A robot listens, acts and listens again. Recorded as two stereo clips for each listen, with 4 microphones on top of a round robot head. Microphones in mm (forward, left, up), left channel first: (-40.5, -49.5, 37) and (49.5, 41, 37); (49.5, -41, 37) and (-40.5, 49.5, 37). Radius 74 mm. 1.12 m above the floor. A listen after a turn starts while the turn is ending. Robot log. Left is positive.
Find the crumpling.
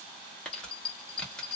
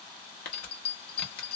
note: The crumpling: 50° right.
cmd yaw -50
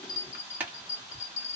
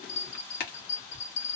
note: The crumpling is now 30° right.
cmd yaw -30
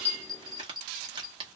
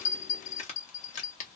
note: The crumpling is now 10° right.
cmd yaw -10
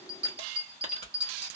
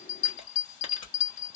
end: Facing the crumpling.